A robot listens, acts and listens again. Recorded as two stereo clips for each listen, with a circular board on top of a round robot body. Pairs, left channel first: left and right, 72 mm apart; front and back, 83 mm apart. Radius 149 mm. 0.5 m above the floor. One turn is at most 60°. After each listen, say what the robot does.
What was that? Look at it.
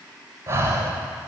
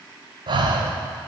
Turn 60° right.
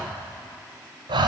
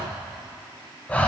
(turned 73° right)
Turn 60° right.
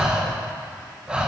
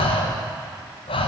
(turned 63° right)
Turn 10° right.
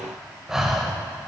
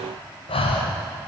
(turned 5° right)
Facing the breathing, under 1 m away.